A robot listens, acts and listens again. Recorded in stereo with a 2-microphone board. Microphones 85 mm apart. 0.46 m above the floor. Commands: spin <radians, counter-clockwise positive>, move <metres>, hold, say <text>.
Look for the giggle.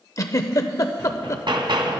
spin 0.79
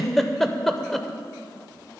say Found it: a giggle, straight ahead, under 1 m away.